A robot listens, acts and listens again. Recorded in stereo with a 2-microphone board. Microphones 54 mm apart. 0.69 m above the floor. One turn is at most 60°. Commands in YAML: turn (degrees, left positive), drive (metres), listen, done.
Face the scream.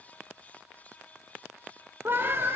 turn: -45
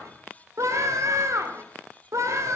turn: -60
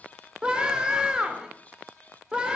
turn: -15
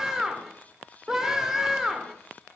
turn: -10
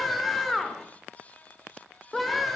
done: "Facing the scream, 2 to 4 m away."